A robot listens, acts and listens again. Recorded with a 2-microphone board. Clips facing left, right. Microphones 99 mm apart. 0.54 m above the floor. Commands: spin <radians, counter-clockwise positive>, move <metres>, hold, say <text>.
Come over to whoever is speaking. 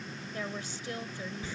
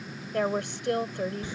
spin -1.13
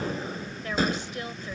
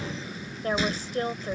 spin -0.70
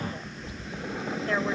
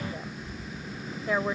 spin -0.17
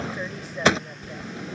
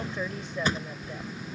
move 1.0
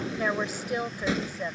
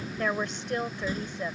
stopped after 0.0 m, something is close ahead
say Blocked. The woman speaking is further on, straight ahead.